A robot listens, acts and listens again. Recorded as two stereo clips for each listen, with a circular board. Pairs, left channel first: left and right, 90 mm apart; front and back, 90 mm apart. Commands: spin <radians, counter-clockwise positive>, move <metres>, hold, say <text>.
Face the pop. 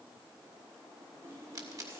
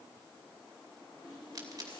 spin -2.36
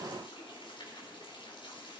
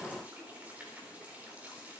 say I heard a pop from this way, but can't make it out now.